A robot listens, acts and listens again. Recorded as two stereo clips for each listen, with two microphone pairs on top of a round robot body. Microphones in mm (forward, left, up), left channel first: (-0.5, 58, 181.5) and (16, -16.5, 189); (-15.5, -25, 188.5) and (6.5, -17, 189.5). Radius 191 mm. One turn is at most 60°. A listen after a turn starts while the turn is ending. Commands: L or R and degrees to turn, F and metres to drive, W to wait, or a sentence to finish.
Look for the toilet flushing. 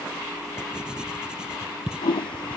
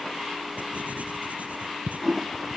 L60
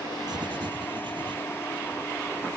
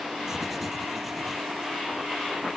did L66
L40
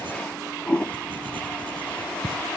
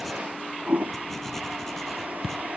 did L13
L25
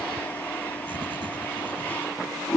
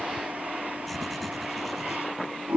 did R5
L35
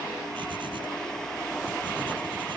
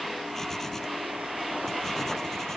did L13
L20
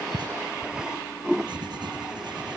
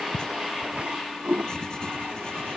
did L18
Facing the toilet flushing.